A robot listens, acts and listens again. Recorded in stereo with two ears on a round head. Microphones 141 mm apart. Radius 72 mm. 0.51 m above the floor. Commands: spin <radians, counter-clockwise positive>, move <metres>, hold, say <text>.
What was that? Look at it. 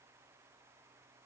hold
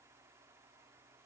hold
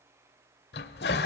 spin 1.22
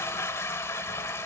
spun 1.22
spin 0.26
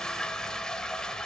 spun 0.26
say Found it: a toilet flushing, straight ahead.